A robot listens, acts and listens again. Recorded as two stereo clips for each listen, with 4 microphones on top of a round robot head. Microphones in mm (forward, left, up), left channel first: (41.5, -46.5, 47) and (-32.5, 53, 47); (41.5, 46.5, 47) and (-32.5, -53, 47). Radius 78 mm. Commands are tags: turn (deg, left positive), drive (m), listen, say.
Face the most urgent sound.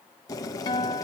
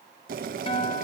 <listen/>
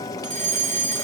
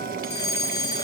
<turn deg="115"/>
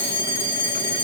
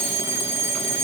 <turn deg="15"/>
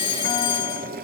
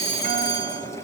<say>Facing the fire alarm.</say>